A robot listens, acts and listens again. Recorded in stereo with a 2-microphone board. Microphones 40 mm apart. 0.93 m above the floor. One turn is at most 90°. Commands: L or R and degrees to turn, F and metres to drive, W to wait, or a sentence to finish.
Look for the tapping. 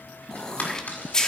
L45
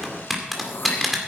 Found it: tapping, straight ahead, 2 to 4 m away.